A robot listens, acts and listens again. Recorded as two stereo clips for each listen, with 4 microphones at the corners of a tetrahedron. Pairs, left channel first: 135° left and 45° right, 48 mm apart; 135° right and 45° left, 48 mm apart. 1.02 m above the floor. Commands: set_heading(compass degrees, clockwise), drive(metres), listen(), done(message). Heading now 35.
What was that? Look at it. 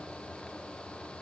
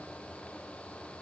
listen()
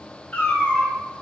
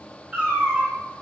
set_heading(310)
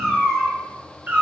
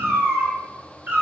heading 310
done("Facing the cat meowing, 1 to 2 m away.")